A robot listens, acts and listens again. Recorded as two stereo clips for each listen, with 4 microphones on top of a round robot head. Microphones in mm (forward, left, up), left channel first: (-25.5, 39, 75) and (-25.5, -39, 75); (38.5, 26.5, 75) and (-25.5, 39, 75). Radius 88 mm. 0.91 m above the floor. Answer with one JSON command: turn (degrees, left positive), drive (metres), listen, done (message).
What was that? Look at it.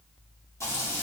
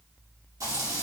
{"turn": 140}
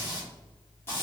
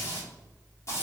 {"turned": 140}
{"turn": 30}
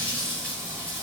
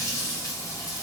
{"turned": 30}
{"turn": 15}
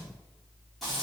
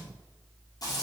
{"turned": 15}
{"done": "Found it: frying, straight ahead."}